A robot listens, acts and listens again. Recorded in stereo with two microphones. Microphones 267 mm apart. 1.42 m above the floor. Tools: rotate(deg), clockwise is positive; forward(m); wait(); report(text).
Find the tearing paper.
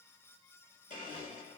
wait()
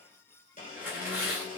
rotate(30)
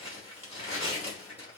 rotate(-20)
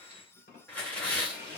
report("Facing the tearing paper.")